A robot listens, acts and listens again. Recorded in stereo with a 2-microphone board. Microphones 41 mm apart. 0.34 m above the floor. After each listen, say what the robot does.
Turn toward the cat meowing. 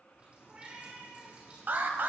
Turn 30° right.
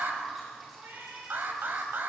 Turn 120° right.
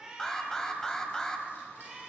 Turn 15° right.
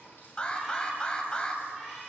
Keep listening.
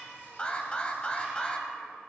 Facing the cat meowing, over 4 m away.